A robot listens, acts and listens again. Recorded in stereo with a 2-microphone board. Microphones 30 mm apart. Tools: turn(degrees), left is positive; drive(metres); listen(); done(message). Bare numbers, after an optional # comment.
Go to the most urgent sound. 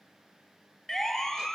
turn(30)
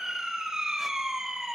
# So it is at 20° right.
turn(-20)
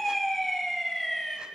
drive(1.0)
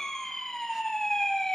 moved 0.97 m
# The siren is now 15° left.
turn(15)
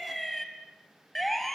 drive(1.0)
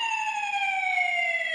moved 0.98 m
drive(1.0)
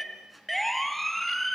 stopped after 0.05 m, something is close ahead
done("I am next to the siren.")